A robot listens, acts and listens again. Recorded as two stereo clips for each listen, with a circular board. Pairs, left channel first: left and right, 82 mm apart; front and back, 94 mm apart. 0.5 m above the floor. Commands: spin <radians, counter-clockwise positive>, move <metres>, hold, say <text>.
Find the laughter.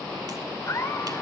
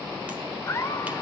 spin 0.87
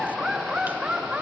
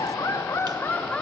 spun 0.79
spin -0.96
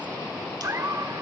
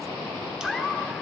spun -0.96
spin -1.57
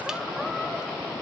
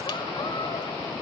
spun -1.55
hold
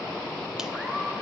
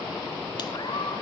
spin -0.17
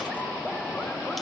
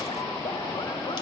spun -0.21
hold
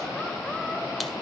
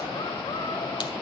hold
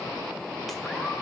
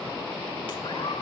say Facing where the laughter came from. I can't hear it now.